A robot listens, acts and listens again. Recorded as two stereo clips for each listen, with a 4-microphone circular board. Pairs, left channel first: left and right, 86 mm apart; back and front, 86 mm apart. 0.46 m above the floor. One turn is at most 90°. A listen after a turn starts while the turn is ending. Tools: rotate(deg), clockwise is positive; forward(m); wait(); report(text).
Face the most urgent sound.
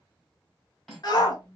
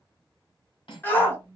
rotate(-90)
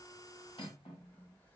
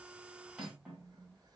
rotate(-30)
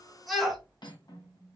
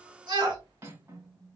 report("Found it: a shout, straight ahead, 1 to 2 m away.")